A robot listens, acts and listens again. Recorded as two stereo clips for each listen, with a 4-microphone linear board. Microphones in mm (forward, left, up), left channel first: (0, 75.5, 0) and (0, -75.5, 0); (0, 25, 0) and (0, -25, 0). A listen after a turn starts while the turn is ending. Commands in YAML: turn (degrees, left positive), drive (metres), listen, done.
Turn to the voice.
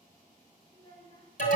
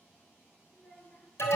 turn: 30
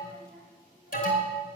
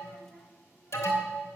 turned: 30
listen: true
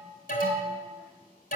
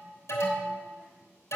listen: true
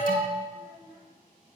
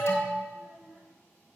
turn: -10
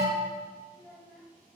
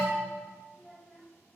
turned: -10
done: "Found it: a child speaking, straight ahead, over 4 m away."